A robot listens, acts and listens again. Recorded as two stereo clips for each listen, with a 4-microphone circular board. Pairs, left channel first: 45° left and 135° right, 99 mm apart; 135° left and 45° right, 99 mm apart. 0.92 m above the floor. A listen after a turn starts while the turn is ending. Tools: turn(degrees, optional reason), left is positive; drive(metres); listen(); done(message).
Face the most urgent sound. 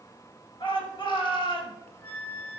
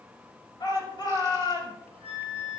turn(degrees=85, reason="The shout: 85° left.")
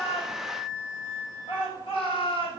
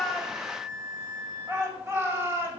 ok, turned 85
turn(degrees=20, reason="The shout is now 20° left.")
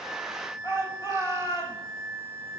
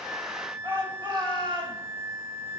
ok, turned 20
done("Facing the shout, over 4 m away.")